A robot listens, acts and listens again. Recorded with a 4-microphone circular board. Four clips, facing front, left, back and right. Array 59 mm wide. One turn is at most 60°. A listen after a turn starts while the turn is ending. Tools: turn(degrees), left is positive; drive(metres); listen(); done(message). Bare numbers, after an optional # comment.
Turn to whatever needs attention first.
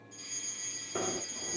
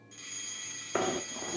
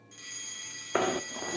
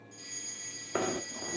# The fire alarm: 130° left.
turn(60)
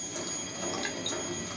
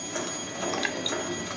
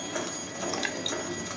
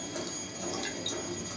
# The fire alarm is now 65° left.
turn(60)
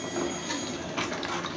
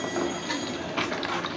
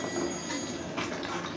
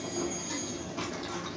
listen()
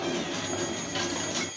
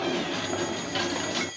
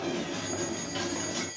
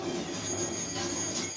# The fire alarm is now 30° left.
turn(30)
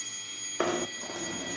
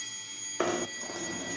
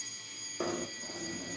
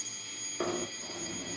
# The fire alarm is now 10° right.
turn(-10)
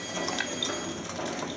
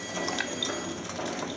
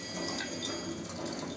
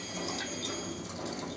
listen()
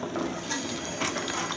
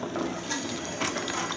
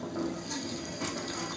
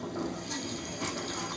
listen()
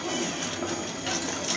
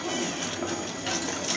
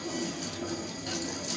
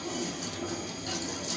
done("Facing where the fire alarm came from. I can't hear it now.")